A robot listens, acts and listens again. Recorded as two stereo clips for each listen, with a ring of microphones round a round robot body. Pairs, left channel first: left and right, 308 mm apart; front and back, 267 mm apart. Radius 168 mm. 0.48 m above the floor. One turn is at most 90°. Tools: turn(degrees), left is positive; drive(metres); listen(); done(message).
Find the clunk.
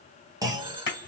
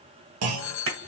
turn(degrees=-90)
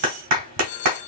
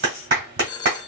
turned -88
turn(degrees=-80)
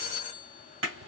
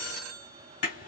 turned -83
done("Facing where the clunk came from. I can't hear it now.")